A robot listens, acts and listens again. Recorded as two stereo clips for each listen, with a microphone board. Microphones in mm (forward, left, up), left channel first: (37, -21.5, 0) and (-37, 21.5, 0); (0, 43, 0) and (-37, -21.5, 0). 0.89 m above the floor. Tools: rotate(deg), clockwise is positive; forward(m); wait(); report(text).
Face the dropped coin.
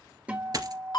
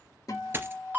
rotate(175)
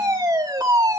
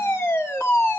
report("I heard a dropped coin from this way, but can't make it out now.")